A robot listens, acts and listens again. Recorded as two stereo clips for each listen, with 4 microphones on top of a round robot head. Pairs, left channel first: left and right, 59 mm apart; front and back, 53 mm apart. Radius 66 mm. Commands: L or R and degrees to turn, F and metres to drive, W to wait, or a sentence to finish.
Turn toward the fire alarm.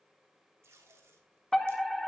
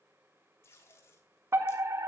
L175
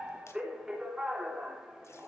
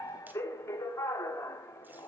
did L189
R15
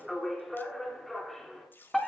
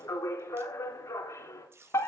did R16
Facing the fire alarm.